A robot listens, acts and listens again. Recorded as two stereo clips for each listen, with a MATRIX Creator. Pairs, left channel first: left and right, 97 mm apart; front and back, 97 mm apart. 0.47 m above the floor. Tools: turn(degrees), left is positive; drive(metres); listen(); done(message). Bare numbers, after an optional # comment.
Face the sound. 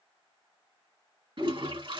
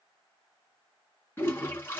# The toilet flushing: 65° right.
turn(-65)
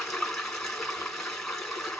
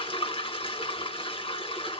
done("Found it: a toilet flushing, straight ahead, 2 to 4 m away.")